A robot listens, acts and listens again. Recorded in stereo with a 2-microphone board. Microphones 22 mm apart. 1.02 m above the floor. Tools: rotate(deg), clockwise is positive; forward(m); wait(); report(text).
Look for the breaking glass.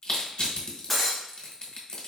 rotate(-30)
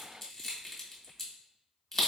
wait()
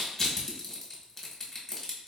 report("I heard breaking glass, but can't make it out now. It was about 25° right or 145° left.")